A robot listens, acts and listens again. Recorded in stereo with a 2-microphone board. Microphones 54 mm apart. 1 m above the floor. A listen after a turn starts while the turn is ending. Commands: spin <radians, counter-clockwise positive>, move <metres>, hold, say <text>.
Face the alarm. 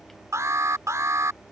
spin -1.05
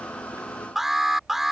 say Facing the alarm.